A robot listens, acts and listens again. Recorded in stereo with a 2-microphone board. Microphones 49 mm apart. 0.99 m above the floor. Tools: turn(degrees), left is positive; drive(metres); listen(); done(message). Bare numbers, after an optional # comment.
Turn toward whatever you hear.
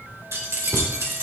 turn(-90)
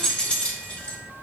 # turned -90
# So it is at 30° left.
turn(30)
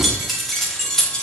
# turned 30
# The keys jangling is now 15° left.
turn(15)
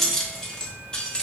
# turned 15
# The keys jangling is now 20° left.
turn(20)
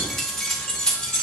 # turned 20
# The keys jangling is now 20° left.
turn(20)
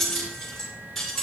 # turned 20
done("Facing the keys jangling, 2 to 4 m away.")